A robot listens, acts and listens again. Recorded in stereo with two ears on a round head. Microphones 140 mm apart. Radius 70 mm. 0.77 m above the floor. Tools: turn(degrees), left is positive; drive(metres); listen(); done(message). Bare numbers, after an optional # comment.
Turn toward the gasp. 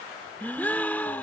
turn(30)
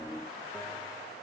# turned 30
listen()
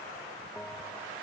done("I heard a gasp, but can't make it out now. It was about 20° right or 140° left.")